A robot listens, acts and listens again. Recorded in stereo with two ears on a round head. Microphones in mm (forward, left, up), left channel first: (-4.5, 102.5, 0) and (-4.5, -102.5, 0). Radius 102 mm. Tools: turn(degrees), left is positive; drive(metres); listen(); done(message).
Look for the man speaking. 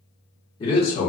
turn(degrees=30)
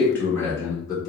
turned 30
turn(degrees=20)
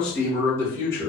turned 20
turn(degrees=15)
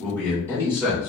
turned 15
turn(degrees=15)
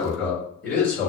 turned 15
turn(degrees=10)
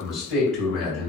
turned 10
done("Facing the man speaking.")